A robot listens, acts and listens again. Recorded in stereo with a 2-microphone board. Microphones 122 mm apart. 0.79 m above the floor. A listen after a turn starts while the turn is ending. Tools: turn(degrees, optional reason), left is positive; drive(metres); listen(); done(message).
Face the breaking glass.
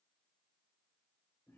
listen()
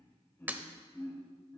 turn(degrees=-15, reason="The breaking glass: about 15° right or 165° right.")
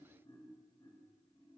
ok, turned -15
listen()
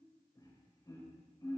done("I heard breaking glass, but can't make it out now. It was about straight ahead or 150° right.")